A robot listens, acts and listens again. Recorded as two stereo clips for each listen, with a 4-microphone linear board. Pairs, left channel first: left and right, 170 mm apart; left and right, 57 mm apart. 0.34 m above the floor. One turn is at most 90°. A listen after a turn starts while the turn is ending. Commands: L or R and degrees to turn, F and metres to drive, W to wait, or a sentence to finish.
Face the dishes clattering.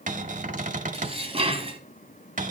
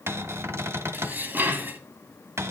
R35
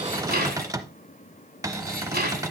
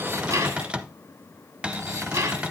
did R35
R90
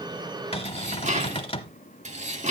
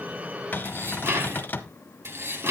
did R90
R45
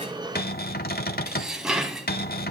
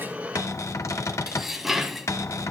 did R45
Facing the dishes clattering, 1 to 2 m away.